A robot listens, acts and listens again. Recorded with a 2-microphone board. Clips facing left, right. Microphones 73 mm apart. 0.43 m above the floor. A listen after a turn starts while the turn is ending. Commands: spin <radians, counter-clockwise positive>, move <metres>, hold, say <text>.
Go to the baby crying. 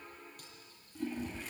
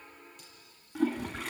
hold
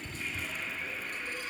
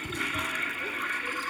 hold
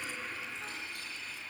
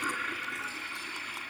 say I can't make out a baby crying to turn to.